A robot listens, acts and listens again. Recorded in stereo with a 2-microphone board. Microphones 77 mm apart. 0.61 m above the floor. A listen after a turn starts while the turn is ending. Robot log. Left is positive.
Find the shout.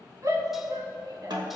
note: The shout: about 50° right or 130° right.
cmd yaw -50
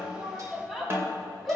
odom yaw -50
end: Facing the shout, 2 to 4 m away.